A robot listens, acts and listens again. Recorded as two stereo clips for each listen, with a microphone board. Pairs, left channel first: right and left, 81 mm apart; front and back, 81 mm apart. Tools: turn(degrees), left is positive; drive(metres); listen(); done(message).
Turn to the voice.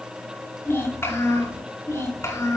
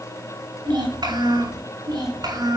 turn(degrees=-145)
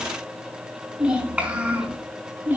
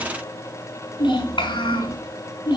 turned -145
turn(degrees=20)
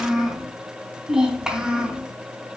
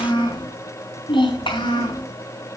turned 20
turn(degrees=10)
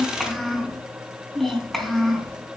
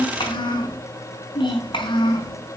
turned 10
done("Found it: a child speaking, straight ahead, 2 to 4 m away.")